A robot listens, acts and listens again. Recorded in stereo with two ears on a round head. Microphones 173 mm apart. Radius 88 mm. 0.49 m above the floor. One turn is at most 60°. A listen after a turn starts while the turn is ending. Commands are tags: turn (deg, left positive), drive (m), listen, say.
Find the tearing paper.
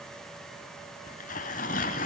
<turn deg="40"/>
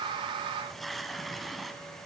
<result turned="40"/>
<say>Found it: tearing paper, straight ahead, 1 to 2 m away.</say>